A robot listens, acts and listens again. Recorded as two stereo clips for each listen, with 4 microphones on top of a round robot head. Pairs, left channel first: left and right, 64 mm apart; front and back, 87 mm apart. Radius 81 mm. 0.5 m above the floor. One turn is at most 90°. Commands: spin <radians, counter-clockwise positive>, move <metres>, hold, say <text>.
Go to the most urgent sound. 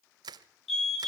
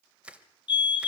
move 1.0
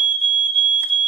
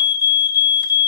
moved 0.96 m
spin 0.17
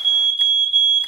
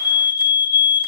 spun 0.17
move 1.0
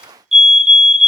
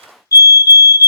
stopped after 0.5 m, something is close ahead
say I am next to the fire alarm.